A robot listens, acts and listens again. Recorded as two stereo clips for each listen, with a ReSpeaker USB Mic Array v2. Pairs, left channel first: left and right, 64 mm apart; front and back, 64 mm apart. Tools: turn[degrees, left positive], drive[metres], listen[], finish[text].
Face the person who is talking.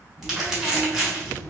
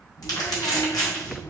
Thought: The child speaking: 30° left.
Action: turn[30]
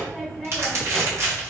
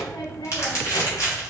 Action: finish[Facing the child speaking, 1 to 2 m away.]